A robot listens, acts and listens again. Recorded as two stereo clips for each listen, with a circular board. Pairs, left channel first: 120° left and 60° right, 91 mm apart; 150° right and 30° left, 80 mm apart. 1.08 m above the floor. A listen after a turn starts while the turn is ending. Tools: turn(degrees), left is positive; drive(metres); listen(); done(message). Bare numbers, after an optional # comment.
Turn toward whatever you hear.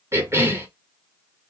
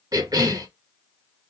done("Found it: a cough, straight ahead, 1 to 2 m away.")